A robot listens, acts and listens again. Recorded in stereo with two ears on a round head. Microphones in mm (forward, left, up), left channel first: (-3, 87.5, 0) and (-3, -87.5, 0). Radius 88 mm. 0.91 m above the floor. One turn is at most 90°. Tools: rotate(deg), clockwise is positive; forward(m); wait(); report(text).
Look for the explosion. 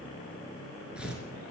wait()
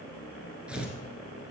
wait()
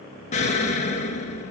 rotate(-35)
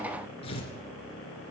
wait()
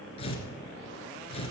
report("I heard an explosion, but can't make it out now. It was about straight ahead or 110° left.")